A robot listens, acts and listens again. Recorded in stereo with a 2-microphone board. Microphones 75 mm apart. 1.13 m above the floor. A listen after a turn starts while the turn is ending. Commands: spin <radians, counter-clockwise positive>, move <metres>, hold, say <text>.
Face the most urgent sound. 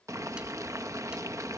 hold
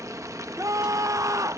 spin -0.87
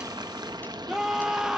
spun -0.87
spin -0.17
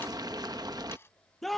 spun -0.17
say Found it: a scream, straight ahead.